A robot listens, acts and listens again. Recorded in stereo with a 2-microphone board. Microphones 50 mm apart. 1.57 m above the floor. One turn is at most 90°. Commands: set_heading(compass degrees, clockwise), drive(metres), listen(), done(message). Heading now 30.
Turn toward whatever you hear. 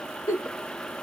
set_heading(320)
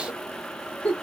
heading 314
set_heading(284)
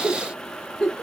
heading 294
set_heading(284)
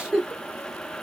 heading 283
done("Found it: a giggle, straight ahead.")